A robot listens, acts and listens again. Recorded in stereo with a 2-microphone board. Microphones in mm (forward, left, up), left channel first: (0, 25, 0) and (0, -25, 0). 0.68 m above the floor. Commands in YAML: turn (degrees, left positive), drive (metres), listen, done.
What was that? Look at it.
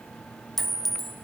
turn: 30
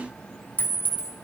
turn: 145
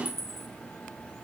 turn: 10
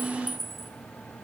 done: "Facing the clink, under 1 m away."